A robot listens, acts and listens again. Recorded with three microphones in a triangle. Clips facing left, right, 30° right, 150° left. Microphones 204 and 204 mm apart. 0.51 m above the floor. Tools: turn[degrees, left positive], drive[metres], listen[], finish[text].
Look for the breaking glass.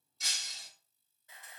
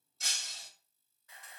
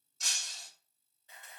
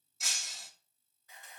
Thought: The breaking glass: 125° right.
Action: turn[-125]
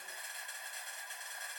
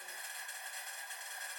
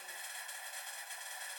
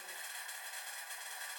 Action: finish[I heard breaking glass from this way, but can't make it out now.]